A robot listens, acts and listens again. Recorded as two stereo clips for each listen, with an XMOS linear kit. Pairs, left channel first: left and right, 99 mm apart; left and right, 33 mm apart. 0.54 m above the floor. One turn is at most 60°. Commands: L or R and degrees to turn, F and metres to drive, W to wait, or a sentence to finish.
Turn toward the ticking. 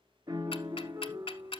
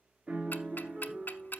L60
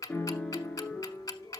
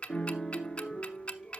L40
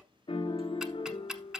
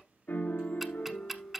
R10
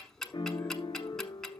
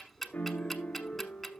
Facing the ticking, under 1 m away.